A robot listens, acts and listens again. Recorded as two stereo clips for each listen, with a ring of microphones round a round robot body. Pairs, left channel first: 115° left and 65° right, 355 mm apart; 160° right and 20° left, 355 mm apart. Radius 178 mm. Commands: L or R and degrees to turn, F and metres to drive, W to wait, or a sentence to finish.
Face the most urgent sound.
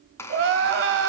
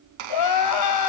R125
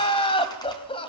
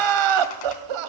L35
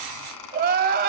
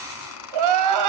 Found it: crying, straight ahead.